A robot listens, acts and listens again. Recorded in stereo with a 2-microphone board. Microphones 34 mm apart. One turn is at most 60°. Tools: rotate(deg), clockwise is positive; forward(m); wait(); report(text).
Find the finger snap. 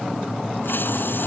wait()
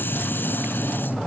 wait()
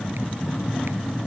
report("I can't make out a finger snap.")